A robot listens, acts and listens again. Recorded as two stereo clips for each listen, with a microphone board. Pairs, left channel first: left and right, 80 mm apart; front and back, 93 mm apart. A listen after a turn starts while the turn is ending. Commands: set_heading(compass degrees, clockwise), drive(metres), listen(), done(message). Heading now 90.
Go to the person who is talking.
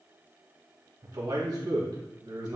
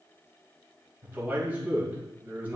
set_heading(200)
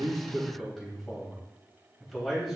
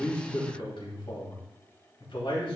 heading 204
drive(1.0)
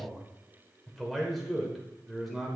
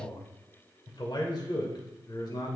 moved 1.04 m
drive(1.0)
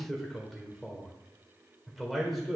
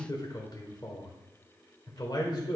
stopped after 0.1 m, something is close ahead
done("I am next to the man speaking.")